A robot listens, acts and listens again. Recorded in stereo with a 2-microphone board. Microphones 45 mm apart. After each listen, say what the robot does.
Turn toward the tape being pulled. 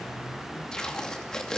Turn 30° left.
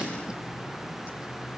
Turn 20° right.
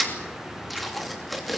Facing the tape being pulled.